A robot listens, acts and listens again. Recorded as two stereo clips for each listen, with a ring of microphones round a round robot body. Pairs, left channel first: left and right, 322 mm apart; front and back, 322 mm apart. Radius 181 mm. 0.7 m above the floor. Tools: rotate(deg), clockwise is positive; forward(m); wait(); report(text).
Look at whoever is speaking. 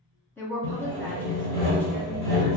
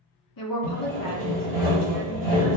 report("Found it: a woman speaking, straight ahead.")